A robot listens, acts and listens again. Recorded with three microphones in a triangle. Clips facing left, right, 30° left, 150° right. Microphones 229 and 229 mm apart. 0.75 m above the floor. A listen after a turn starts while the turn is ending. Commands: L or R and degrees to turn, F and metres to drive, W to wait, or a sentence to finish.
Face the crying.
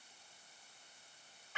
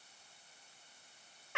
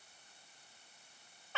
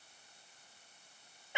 W
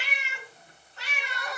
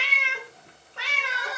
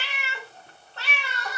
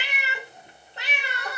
R175
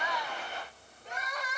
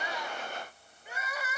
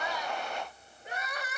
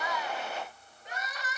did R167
R10
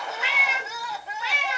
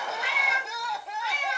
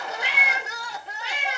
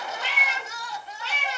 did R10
Found it: crying, straight ahead, under 1 m away.